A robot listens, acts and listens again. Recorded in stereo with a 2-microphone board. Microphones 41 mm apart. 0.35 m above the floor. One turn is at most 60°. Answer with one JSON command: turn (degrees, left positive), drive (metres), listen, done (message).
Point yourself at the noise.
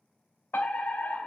{"turn": 55}
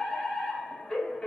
{"turn": 20}
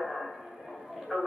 {"done": "Found it: a fire alarm, straight ahead, 2 to 4 m away."}